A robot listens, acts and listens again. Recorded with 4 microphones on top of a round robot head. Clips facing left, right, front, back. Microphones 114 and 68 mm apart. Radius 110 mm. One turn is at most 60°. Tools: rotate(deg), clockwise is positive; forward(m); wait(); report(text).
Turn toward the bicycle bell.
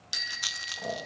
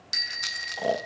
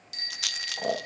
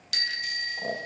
rotate(-60)
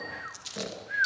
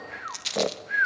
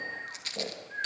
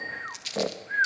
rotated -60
rotate(-60)
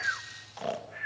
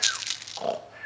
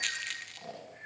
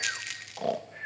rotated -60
rotate(-50)
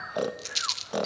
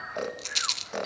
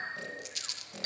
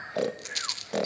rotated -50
rotate(-25)
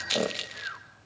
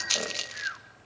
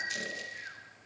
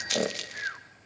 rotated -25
wait()
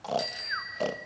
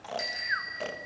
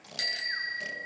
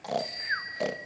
rotate(-15)
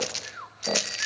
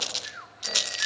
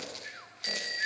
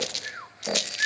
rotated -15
wait()
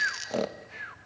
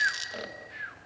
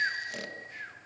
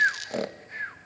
wait()
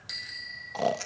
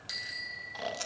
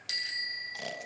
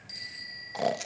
report("Found it: a bicycle bell, straight ahead, 2 to 4 m away.")